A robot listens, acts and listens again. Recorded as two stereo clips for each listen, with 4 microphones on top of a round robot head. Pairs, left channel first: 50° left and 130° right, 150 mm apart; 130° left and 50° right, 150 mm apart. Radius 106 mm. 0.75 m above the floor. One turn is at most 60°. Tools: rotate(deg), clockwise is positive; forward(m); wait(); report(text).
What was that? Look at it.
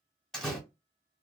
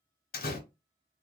rotate(-60)
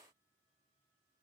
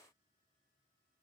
rotate(-60)
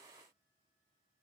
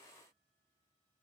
rotate(-20)
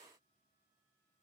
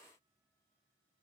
report("Facing where the door slam came from. I can't hear it now.")